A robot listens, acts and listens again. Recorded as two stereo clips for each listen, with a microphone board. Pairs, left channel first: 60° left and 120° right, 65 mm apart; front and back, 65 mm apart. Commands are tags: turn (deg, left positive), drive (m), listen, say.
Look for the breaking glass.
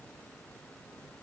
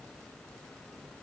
<listen/>
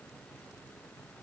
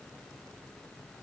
<listen/>
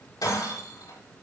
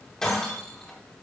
<turn deg="80"/>
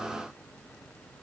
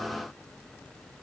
<say>I heard breaking glass from this way, but can't make it out now.</say>